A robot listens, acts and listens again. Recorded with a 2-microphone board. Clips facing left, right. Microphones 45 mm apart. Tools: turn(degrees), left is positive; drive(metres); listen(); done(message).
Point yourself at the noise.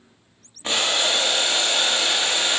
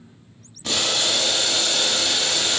turn(degrees=30)
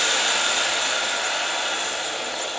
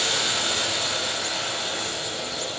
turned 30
turn(degrees=120)
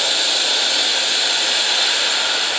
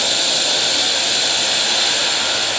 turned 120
done("Facing the boiling, 1 to 2 m away.")